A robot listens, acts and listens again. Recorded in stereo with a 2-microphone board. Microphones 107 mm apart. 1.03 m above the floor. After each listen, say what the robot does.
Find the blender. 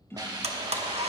Turn 90° right.
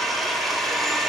Found it: a blender, straight ahead, under 1 m away.